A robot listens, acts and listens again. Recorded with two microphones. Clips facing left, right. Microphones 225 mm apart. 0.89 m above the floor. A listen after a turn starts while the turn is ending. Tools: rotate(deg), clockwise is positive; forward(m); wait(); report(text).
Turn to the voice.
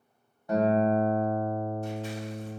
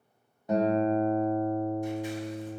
wait()
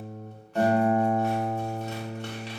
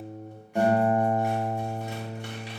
wait()
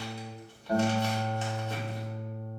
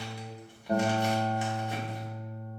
report("I can't make out anyone speaking, only scissors and a guitar.")